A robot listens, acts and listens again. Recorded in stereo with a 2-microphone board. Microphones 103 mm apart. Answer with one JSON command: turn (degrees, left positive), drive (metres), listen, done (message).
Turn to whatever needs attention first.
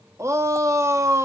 {"turn": -30}
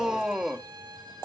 {"done": "Facing the shout, 1 to 2 m away."}